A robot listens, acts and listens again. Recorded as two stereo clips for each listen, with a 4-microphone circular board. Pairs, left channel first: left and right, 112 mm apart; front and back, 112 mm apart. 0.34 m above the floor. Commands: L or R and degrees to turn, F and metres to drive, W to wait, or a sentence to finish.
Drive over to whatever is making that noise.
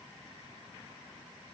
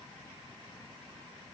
W
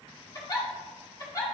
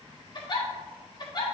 L40
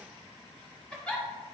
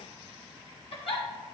L10
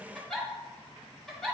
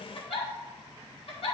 F1.0
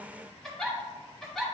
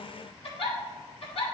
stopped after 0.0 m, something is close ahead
Blocked. The giggle is further on, straight ahead.